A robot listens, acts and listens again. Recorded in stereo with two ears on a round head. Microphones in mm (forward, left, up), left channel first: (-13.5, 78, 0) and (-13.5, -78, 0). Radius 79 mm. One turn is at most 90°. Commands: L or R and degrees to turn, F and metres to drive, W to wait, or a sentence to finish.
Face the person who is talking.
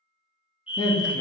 L20
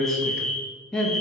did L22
Found it: a man speaking, straight ahead, 1 to 2 m away.